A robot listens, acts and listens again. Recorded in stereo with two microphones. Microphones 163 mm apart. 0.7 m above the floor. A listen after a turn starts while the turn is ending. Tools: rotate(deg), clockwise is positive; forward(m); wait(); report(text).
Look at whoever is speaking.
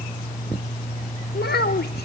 rotate(-90)
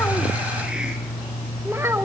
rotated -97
rotate(15)
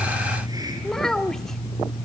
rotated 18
report("Facing the child speaking, under 1 m away.")